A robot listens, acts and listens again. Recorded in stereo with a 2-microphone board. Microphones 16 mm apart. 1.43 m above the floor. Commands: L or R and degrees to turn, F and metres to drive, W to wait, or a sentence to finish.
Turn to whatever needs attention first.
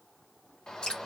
L45
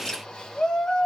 L85
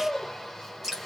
L15
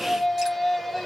Found it: a shout, straight ahead, 1 to 2 m away.